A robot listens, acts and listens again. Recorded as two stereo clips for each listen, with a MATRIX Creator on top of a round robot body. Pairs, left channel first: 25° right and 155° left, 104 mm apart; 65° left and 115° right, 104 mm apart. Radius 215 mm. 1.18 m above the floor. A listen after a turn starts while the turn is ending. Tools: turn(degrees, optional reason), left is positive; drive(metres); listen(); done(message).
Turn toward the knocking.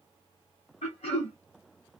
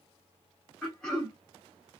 listen()
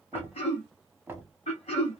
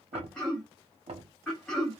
turn(degrees=-130, reason="The knocking: 130° right.")
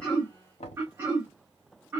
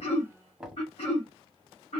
turn(degrees=-25, reason="The knocking is now 25° right.")
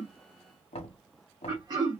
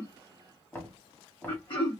done("Found it: knocking, straight ahead.")